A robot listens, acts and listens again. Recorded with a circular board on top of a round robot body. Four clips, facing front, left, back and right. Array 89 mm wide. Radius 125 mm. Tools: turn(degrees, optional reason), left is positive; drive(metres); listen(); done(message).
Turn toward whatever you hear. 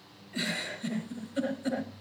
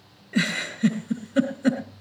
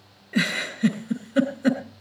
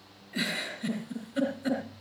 turn(degrees=145, reason="The giggle: 145° left.")
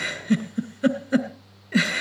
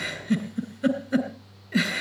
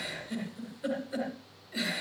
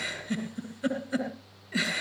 turn(degrees=10, reason="The giggle is now 10° left.")
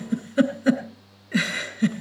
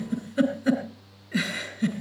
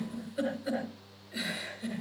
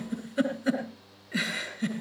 done("Facing the giggle.")